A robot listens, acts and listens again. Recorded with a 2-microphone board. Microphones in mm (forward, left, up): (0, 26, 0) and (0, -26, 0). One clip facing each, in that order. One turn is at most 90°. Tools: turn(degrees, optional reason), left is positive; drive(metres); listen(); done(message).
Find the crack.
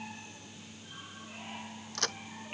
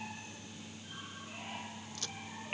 turn(degrees=70, reason="The crack: about 70° left or 110° left.")
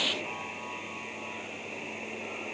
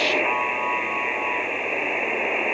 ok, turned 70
listen()
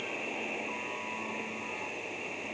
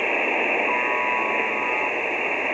done("I heard a crack, but can't make it out now. It was about straight ahead or 40° left.")